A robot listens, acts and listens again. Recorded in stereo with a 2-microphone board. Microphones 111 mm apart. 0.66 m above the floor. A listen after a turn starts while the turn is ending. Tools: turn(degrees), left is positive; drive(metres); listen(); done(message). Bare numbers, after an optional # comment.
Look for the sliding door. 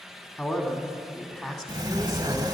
# The sliding door: about 40° right or 140° right.
turn(-40)
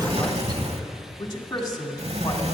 # So it is at 100° right.
turn(-100)
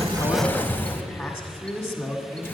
# The sliding door is now 20° left.
turn(20)
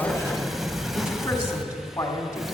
done("Facing the sliding door, under 1 m away.")